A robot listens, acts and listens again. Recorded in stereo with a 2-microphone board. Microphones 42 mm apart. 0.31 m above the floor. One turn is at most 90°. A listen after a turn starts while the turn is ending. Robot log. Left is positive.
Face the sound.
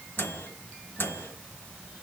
note: The microwave: about 55° left or 125° left.
cmd yaw +55
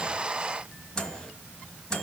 note: So it is at 20° left.
cmd yaw +20
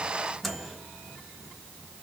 end: Facing the microwave, 1 to 2 m away.